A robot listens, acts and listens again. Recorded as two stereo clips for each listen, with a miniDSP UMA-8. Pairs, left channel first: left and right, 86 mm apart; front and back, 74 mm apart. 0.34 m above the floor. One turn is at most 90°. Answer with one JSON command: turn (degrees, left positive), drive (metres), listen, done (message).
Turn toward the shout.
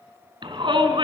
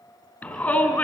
{"turn": -70}
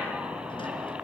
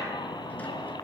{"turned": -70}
{"turn": -10}
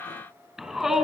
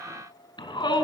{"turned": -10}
{"done": "Found it: a shout, straight ahead."}